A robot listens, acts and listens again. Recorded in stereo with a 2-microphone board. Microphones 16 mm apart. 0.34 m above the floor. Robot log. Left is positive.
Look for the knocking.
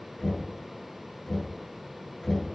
note: The knocking: about 50° left or 130° left.
cmd yaw +50
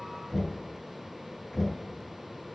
end: Found it: knocking, straight ahead, 2 to 4 m away.